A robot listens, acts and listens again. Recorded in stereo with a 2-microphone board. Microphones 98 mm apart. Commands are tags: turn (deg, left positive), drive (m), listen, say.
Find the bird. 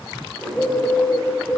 <turn deg="30"/>
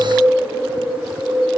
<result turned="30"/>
<turn deg="-20"/>
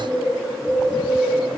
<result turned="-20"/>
<say>Facing the bird, 1 to 2 m away.</say>